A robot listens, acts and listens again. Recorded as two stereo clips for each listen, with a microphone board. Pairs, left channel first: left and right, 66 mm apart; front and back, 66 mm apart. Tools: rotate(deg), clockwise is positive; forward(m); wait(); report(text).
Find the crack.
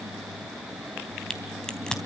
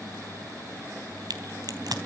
rotate(-170)
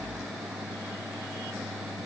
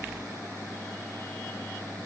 report("I heard a crack from this way, but can't make it out now.")